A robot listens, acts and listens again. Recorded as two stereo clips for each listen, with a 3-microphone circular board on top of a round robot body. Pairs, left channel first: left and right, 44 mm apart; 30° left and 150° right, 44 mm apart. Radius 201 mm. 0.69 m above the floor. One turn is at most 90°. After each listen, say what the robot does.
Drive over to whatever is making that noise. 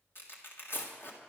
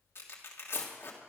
Turn 55° left.
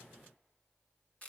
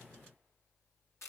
Turn 30° left.
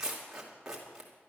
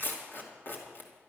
Turn 15° right.
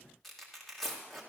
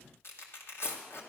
Drive 1.0 m forward.
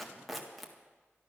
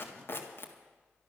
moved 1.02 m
Drive 1.0 m forward.
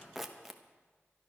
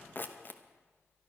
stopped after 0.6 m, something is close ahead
I am next to the tearing paper.